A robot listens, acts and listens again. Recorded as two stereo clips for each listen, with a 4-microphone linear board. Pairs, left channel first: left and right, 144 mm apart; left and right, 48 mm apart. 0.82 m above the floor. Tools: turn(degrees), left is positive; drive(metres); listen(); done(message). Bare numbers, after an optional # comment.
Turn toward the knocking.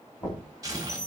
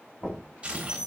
# The knocking: about 20° left or 160° left.
turn(20)
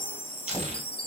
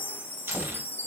listen()
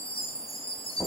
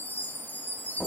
done("Facing the knocking, 2 to 4 m away.")